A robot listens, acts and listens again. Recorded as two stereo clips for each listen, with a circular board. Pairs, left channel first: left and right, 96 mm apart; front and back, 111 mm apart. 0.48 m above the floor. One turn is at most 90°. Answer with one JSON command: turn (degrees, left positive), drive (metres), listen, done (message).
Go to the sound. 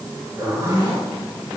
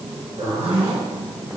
{"turn": -90}
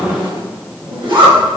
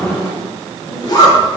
{"turn": -55}
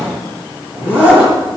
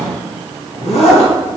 {"turn": -15}
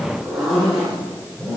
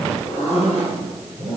{"drive": 1.0}
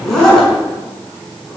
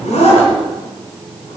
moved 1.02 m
{"drive": 1.0}
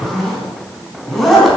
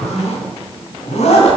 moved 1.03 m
{"drive": 1.0}
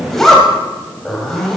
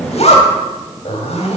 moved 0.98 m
{"drive": 1.0}
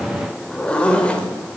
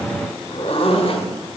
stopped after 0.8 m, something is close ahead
{"turn": 15}
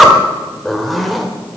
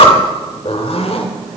{"done": "I am next to the zipper."}